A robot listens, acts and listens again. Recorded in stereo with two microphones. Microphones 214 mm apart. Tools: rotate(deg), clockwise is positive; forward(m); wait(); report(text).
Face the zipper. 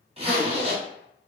rotate(25)
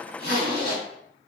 rotate(125)
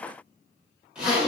report("Facing the zipper, under 1 m away.")